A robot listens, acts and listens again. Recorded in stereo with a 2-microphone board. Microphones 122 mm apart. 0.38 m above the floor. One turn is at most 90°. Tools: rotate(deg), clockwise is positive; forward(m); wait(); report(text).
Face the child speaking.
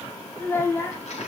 rotate(-20)
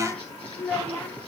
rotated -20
rotate(-20)
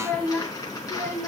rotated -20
rotate(-30)
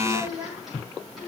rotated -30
rotate(15)
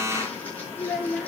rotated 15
report("Found it: a child speaking, straight ahead, over 4 m away.")